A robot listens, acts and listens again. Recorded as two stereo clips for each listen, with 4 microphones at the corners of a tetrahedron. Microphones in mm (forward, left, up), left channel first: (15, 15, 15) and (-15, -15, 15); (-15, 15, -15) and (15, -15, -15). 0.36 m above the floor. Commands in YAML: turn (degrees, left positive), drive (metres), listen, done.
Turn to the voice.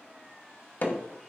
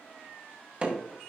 listen: true
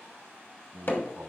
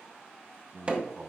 turn: -120
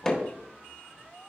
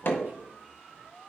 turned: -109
turn: -10
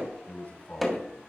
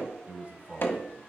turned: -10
done: "Facing the man speaking, 2 to 4 m away."